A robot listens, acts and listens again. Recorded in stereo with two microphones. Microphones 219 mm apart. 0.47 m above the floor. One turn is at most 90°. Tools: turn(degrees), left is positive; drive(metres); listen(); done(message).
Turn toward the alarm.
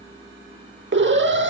turn(degrees=-55)
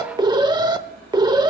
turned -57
turn(degrees=-25)
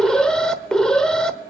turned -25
done("Facing the alarm, under 1 m away.")